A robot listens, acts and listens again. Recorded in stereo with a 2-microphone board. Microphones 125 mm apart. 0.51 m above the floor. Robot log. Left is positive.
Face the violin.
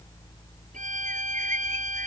cmd yaw -90
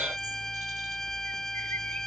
end: Facing the violin.